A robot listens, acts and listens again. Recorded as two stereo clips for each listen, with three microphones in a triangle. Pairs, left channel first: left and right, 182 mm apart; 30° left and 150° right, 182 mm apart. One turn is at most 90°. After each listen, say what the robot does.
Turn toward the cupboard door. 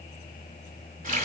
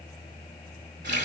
Keep listening.
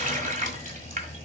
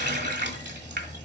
Keep listening.
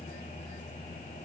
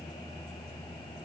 I can't make out a cupboard door to turn to.